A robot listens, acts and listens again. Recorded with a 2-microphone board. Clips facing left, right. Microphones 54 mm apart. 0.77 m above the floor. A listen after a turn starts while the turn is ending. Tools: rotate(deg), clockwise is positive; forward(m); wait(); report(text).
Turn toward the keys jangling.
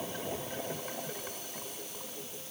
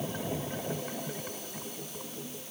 wait()
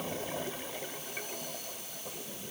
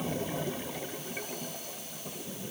wait()
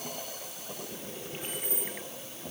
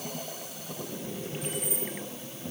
rotate(-30)
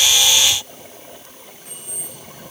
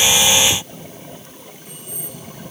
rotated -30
rotate(-120)
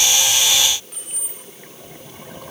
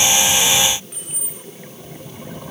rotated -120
rotate(10)
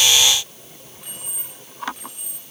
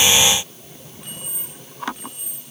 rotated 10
report("Facing the keys jangling.")